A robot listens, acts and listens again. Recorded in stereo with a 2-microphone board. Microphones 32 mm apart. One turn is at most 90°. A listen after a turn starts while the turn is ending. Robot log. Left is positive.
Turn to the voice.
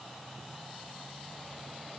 cmd idle
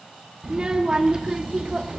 note: The child speaking: about 25° right or 155° right.
cmd yaw -25
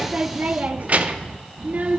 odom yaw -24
note: So it is at 130° right.
cmd yaw -90
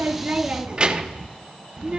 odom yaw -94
note: The child speaking is now 35° right.
cmd yaw -35
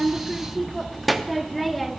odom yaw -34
end: Found it: a child speaking, straight ahead.